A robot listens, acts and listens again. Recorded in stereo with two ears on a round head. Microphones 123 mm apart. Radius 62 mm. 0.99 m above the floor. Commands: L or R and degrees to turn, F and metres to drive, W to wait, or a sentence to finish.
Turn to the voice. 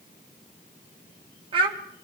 R40
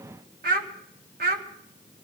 R105
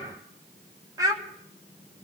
R25
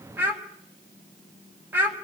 R15
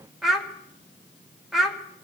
Facing the child speaking, 1 to 2 m away.